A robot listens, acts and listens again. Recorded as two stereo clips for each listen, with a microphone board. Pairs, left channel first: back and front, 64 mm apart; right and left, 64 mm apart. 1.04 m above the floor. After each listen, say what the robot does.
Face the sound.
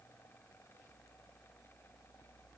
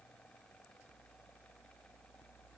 Keep listening.
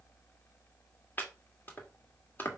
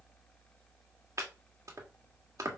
Turn 120° left.
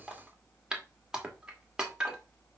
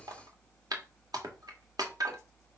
Turn 80° left.
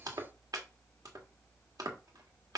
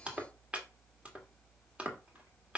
Turn 20° left.
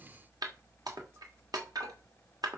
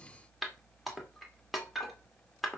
Facing the chopping.